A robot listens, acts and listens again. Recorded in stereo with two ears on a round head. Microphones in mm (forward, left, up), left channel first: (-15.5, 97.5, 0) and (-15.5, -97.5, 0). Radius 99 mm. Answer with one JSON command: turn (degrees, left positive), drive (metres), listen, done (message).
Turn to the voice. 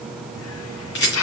{"listen": true}
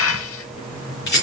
{"listen": true}
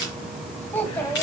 {"turn": 30}
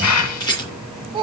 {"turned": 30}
{"turn": -25}
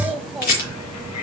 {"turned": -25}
{"done": "Facing the child speaking, 2 to 4 m away."}